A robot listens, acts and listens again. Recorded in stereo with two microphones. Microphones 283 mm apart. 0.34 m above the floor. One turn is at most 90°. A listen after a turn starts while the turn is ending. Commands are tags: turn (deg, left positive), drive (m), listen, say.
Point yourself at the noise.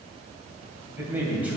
<turn deg="-30"/>
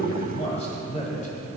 <turn deg="25"/>
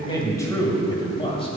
<turn deg="20"/>
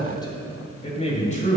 <turn deg="30"/>
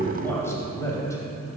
<turn deg="10"/>
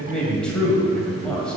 <say>Facing the man speaking.</say>